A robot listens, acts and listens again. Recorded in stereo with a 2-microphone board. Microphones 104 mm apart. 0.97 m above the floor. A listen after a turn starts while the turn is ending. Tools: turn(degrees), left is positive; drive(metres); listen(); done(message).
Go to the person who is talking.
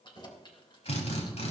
listen()
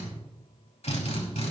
listen()
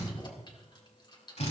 done("I can't make out anyone speaking to turn to.")